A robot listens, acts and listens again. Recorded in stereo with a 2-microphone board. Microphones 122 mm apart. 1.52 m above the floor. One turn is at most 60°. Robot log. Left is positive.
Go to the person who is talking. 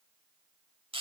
cmd idle
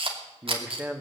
cmd yaw -30
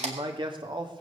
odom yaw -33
note: So it is at 140° right.
cmd yaw -60
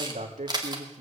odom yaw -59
note: The man speaking is now 80° right.
cmd yaw -60
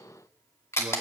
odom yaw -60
note: Nothing new. It was at 20° right.
cmd yaw -20
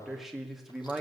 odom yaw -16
cmd fwd 1.0
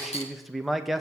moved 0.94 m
cmd fwd 1.0
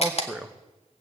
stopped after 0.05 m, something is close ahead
end: I am next to the man speaking.